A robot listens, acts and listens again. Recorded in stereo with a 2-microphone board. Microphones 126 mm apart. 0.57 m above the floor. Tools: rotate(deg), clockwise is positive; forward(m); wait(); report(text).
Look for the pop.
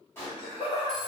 rotate(-20)
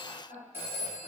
wait()
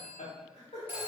report("I heard a pop, but can't make it out now. It was about straight ahead or 140° left.")